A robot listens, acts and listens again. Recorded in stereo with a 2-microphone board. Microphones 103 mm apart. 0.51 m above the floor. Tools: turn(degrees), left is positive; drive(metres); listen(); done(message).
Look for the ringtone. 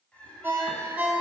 turn(degrees=-20)
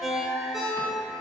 done("Found it: a ringtone, straight ahead.")